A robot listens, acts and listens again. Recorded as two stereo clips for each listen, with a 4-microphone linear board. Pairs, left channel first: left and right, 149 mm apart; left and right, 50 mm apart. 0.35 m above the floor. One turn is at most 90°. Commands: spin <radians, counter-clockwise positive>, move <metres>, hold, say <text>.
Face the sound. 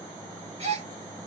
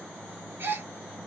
spin -0.79
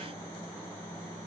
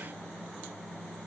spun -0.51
hold
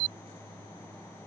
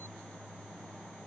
say I heard a gasp, but can't make it out now. It was about 15° right or 105° right.